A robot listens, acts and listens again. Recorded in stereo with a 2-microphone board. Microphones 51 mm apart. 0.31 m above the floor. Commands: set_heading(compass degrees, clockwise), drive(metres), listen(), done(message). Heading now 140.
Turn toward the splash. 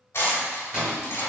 set_heading(170)
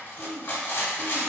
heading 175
listen()
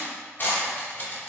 done("I heard a splash, but can't make it out now. It was about 5° left or 115° right.")